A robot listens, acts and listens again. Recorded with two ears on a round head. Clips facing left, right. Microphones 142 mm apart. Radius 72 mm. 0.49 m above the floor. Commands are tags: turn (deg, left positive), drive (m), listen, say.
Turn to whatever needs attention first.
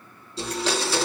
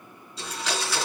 <listen/>
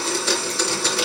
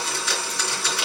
<listen/>
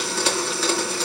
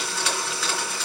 <say>I can't make out anything urgent to turn to.</say>